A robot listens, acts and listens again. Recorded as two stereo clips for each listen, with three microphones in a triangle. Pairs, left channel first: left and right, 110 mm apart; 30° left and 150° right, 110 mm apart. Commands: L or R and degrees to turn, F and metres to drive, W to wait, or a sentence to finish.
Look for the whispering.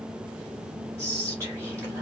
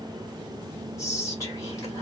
R30
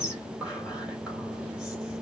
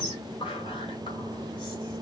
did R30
R10
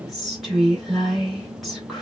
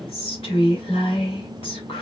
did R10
Found it: whispering, straight ahead, 2 to 4 m away.